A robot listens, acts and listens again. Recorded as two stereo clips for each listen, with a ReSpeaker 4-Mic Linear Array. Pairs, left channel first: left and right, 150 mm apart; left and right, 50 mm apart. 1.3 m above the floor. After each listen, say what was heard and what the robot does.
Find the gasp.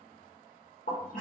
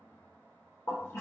Keep listening.
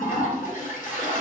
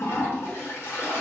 Keep listening.
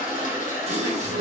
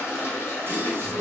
The gasp: about 45° right or 135° right. Turn 45° right.
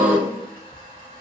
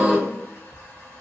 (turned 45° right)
So it is at 10° right. Turn 10° right.
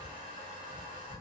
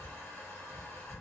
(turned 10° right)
Facing where the gasp came from. I can't hear it now.